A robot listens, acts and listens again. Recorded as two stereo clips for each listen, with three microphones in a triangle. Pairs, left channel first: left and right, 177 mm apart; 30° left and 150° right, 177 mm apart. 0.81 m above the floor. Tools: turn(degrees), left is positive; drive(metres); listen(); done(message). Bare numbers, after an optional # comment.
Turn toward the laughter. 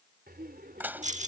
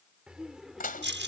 # The laughter: 60° right.
turn(-60)
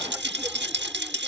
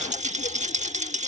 listen()
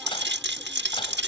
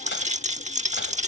listen()
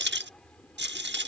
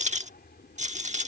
done("Facing the laughter.")